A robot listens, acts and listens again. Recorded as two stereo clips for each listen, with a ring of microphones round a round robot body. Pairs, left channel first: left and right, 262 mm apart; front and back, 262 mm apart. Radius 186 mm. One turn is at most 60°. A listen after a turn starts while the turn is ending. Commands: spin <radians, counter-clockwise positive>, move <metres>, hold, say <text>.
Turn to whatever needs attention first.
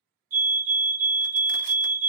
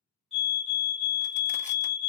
spin -1.05
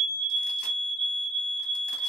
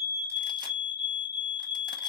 spin -0.87
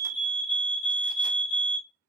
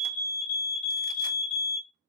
spin -0.26
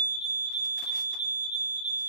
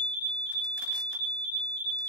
say Found it: a fire alarm, straight ahead.